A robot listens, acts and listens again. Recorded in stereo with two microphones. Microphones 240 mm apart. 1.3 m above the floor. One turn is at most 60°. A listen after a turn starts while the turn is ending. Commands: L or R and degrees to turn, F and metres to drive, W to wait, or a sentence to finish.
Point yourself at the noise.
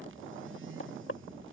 L60
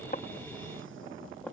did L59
W
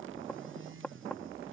Facing the knocking.